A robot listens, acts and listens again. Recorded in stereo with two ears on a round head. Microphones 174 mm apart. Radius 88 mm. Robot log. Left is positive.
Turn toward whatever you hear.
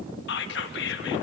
note: The whispering: about 60° left or 120° left.
cmd yaw +60
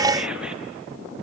cmd idle
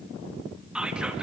end: Facing the whispering, 1 to 2 m away.